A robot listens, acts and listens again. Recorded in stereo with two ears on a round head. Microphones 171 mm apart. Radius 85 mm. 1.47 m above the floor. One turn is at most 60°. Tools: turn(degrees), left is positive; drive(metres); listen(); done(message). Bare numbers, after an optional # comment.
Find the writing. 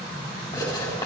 # The writing: about 15° left or 165° left.
turn(15)
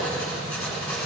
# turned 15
done("Found it: writing, straight ahead.")